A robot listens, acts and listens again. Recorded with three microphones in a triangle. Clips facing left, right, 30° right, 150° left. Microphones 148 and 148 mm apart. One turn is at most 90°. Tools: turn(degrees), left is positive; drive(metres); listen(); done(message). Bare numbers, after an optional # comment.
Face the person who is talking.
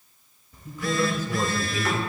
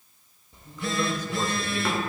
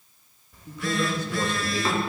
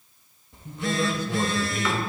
# The man speaking: 170° left.
turn(90)
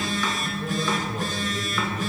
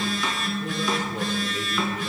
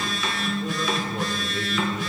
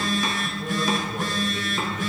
# Nothing new. It was at 80° left.
turn(80)
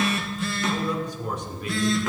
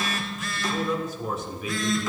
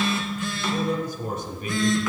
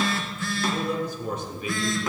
done("Found it: a man speaking, straight ahead.")